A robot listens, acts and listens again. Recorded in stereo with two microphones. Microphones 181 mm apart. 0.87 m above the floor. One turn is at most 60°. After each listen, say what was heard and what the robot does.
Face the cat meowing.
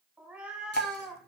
Turn 30° left.
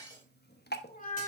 So it is at 130° left. Turn 60° left.
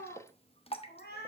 The cat meowing is now 60° left. Turn 60° left.
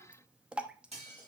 Keep listening.
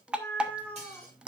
Facing the cat meowing, 2 to 4 m away.